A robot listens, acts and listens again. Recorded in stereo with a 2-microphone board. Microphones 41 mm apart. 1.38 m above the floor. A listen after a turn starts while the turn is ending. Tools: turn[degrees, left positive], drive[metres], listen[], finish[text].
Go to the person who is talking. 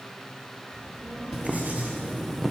Action: turn[90]
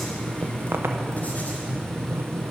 Action: listen[]
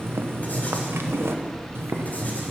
Thought: The child speaking is now 10° left.
Action: turn[10]
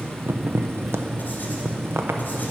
Action: listen[]
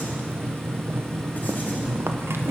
Action: listen[]
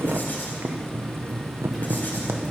Action: finish[I heard a child speaking from this way, but can't make it out now. I did not reach it.]